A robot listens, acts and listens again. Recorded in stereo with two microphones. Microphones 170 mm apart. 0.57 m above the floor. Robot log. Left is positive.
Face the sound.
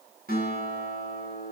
note: The guitar: about 60° right or 120° right.
cmd yaw -60
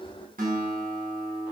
note: So it is at 55° right.
cmd yaw -55
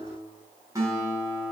note: The guitar is now 20° right.
cmd yaw -20
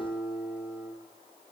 end: Found it: a guitar, straight ahead.